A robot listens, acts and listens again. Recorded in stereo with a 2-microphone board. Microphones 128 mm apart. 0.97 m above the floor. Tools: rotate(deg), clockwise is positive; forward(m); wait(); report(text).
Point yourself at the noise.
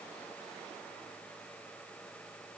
wait()
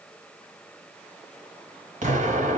rotate(75)
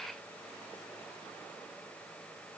wait()
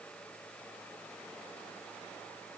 report("I heard an explosion, but can't make it out now. It was about straight ahead or 30° right.")